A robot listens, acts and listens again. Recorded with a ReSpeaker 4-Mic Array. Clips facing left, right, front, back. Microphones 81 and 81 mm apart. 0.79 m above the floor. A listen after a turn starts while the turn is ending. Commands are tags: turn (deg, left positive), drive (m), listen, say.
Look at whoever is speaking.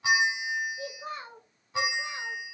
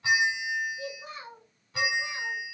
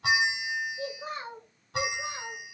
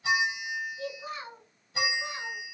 <turn deg="45"/>
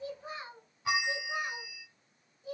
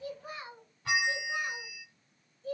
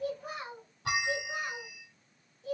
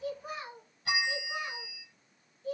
<turn deg="15"/>
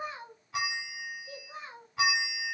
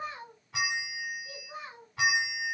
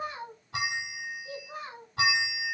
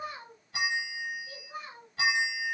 <say>Facing the child speaking.</say>